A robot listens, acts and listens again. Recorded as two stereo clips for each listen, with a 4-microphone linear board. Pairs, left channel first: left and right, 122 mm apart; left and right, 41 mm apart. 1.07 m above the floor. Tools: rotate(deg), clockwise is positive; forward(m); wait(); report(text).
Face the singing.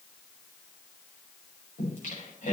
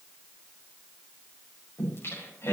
rotate(-90)
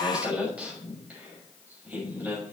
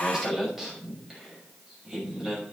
rotate(15)
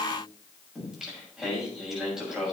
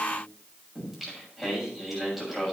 report("Found it: singing, straight ahead.")